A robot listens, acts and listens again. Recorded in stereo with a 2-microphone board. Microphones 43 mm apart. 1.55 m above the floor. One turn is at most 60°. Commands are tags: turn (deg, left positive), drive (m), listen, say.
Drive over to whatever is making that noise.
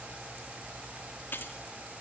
<turn deg="55"/>
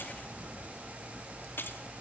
<turn deg="60"/>
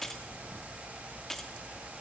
<turn deg="10"/>
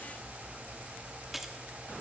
<drive m="1.0"/>
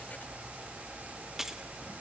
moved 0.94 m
<turn deg="-10"/>
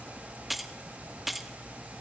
<drive m="1.0"/>
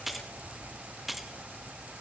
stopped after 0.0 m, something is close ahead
<say>I am next to the keys jangling.</say>